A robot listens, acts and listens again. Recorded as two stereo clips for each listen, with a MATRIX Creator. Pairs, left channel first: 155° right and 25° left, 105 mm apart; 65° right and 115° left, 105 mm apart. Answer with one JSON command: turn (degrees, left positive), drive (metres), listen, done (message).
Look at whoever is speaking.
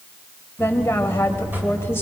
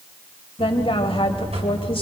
{"turn": -90}
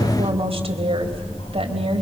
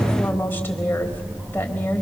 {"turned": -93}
{"done": "Facing the woman speaking, 2 to 4 m away."}